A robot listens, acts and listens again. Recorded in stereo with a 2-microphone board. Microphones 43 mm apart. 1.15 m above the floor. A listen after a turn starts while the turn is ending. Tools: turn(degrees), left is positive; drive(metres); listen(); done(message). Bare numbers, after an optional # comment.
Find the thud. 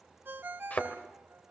# The thud: about 40° left or 140° left.
turn(40)
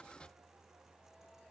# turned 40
listen()
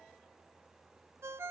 done("I heard a thud, but can't make it out now. It was about straight ahead or 100° left.")